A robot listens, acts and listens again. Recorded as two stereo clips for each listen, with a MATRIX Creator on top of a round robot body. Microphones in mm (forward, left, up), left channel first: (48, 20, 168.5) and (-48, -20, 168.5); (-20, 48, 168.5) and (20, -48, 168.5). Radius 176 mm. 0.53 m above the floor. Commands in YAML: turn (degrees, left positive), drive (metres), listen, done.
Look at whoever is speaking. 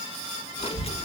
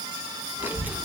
done: "Found it: a child speaking, straight ahead, 1 to 2 m away."